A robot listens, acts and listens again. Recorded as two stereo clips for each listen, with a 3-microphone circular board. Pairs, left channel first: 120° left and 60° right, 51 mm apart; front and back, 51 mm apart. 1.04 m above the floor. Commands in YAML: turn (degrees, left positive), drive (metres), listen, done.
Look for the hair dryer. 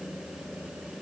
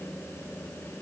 listen: true
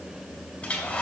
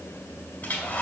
turn: 55
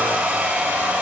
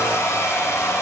done: "Facing the hair dryer."